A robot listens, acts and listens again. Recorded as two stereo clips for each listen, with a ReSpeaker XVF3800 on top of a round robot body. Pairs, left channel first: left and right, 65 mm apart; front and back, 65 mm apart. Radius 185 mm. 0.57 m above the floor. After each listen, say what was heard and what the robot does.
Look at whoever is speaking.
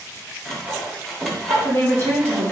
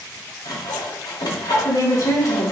The woman speaking: 30° left. Turn 30° left.
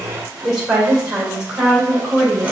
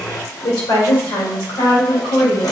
The woman speaking is now 20° right. Turn 20° right.
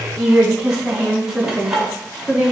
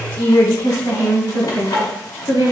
The woman speaking is now 10° right. Turn 10° right.
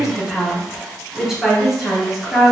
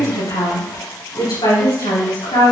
Found it: a woman speaking, straight ahead.